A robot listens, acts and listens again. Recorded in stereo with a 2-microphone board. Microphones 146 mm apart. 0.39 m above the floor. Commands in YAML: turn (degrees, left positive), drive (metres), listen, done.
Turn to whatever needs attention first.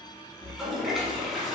listen: true
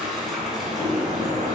listen: true
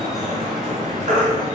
turn: -55
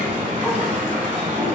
listen: true
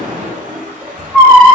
done: "Facing the baby crying."